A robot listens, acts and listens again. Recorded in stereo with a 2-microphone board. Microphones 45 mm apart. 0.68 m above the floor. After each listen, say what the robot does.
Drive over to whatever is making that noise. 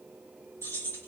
Turn 75° left.
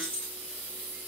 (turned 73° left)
Turn 30° left.
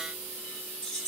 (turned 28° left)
Drive 1.0 m forward.
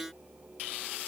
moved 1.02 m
Keep listening.
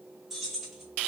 Drive 1.0 m forward.
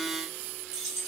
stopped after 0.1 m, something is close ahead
Turn 10° right.
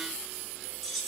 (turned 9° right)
I am next to the keys jangling.